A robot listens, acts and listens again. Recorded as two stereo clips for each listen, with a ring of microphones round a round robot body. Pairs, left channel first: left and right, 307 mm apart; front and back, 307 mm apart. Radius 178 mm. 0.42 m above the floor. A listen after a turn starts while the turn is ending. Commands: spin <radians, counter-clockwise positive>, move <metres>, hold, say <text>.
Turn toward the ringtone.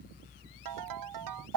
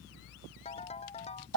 spin -1.31
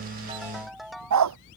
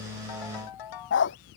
say Facing the ringtone.